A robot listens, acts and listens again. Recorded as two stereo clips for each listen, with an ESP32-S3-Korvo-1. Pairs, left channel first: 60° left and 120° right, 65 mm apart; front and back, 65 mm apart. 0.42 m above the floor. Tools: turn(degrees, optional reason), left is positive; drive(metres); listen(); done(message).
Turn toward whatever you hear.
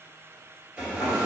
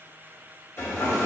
turn(degrees=-50, reason="The hair dryer: 50° right.")
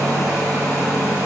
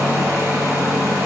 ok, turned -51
done("Facing the hair dryer.")